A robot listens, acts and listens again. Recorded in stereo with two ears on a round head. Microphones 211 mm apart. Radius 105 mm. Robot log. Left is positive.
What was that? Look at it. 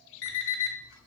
note: The alarm clock: about 50° left or 130° left.
cmd yaw +50
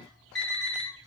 end: Facing the alarm clock, 1 to 2 m away.